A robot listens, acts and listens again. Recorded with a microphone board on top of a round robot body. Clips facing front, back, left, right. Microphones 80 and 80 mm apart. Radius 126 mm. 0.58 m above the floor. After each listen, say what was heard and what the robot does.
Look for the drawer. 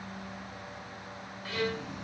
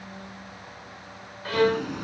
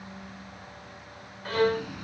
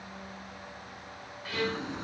The drawer: 150° right. Turn 150° right.
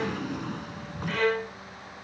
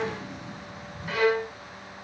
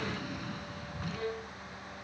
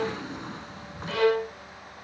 The drawer is now 30° right. Turn 30° right.
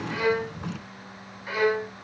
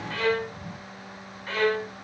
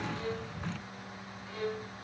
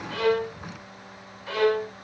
The drawer is now 10° right. Turn 10° right.
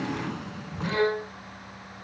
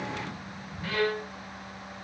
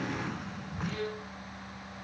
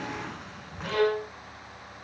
Found it: a drawer, straight ahead.